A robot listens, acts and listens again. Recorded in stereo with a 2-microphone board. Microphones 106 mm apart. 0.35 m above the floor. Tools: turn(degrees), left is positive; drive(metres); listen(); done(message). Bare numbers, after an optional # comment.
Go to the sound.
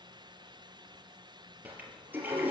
# The toilet flushing: about 15° right or 165° right.
turn(-15)
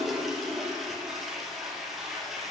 drive(1.0)
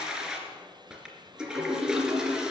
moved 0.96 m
# The toilet flushing is now 10° right.
turn(-10)
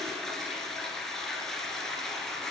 drive(1.0)
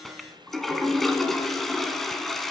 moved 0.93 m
drive(1.0)
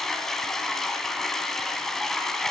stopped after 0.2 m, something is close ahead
done("Arrived at the toilet flushing, straight ahead.")